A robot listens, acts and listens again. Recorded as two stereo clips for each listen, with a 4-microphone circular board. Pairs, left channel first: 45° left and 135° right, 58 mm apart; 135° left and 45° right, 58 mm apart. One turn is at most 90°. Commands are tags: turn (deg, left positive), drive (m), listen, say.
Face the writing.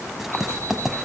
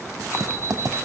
<turn deg="-50"/>
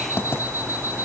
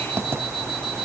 <say>Found it: writing, straight ahead, under 1 m away.</say>